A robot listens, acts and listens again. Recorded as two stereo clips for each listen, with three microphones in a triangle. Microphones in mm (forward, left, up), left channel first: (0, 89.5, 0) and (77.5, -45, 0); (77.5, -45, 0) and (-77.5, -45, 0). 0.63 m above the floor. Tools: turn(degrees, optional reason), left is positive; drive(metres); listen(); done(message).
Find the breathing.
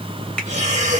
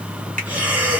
turn(degrees=-100, reason="The breathing: 100° right.")
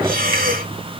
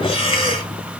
turn(degrees=-55, reason="The breathing is now 55° right.")
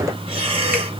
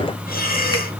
done("Facing the breathing.")